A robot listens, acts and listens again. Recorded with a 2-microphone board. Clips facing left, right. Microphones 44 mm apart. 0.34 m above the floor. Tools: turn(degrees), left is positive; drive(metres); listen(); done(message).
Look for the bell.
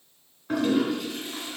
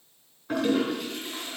listen()
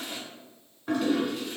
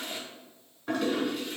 listen()
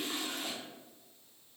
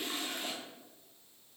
done("I can't make out a bell to turn to.")